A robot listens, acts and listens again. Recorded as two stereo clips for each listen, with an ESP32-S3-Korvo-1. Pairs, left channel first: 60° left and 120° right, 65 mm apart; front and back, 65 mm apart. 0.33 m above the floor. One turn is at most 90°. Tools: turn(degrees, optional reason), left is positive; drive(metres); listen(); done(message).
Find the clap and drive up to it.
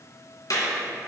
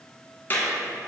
turn(degrees=55, reason="The clap: 55° left.")
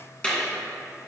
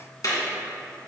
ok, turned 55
turn(degrees=-10, reason="The clap is now 10° right.")
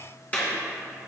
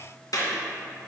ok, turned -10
drive(metres=1.0)
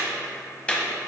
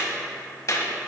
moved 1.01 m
drive(metres=1.0)
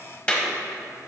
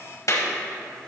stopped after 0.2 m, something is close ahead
turn(degrees=-10, reason="The clap is now 10° right.")
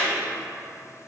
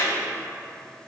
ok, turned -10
done("I am next to the clap.")